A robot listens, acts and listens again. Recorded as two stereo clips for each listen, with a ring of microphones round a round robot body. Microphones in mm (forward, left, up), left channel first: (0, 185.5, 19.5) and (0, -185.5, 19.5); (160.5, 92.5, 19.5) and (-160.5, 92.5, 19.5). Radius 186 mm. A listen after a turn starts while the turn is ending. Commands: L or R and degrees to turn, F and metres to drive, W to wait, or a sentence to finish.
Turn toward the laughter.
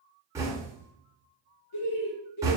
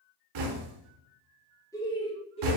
L70
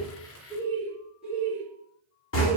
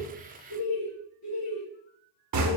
R10
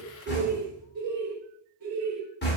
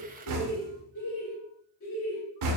R40
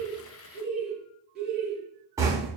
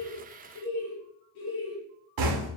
Found it: laughter, straight ahead.